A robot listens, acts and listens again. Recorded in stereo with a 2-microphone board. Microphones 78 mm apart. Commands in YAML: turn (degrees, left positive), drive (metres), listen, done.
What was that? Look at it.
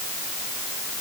listen: true
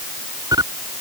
turn: -55
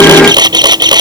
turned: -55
turn: -70
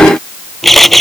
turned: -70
done: "Found it: a camera shutter, straight ahead."